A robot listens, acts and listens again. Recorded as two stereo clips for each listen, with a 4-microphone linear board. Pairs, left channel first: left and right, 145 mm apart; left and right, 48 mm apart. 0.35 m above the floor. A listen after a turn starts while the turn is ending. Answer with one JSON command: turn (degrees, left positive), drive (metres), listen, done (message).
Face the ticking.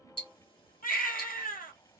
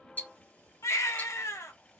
{"turn": 35}
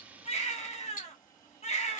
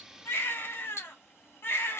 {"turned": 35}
{"turn": 110}
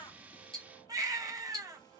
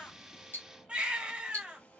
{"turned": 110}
{"turn": 35}
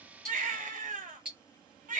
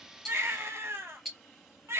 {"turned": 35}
{"done": "Facing the ticking."}